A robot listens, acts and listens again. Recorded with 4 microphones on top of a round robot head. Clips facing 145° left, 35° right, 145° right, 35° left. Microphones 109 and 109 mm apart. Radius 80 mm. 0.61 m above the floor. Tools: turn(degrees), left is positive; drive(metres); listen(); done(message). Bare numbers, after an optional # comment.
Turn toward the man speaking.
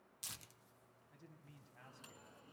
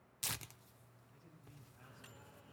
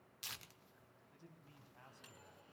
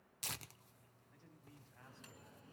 # The man speaking: 140° left.
turn(140)
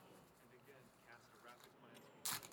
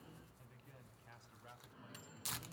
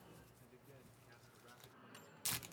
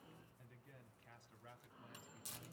# The man speaking is now 25° left.
turn(25)
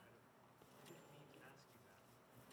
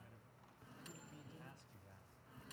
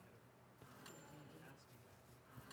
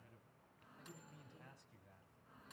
done("Found it: a man speaking, straight ahead.")